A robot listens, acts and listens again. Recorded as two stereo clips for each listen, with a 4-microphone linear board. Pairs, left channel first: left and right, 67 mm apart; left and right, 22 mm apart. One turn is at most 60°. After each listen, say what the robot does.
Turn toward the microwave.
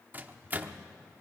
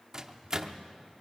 Turn 25° right.
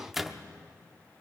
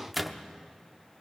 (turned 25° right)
Found it: a microwave, straight ahead.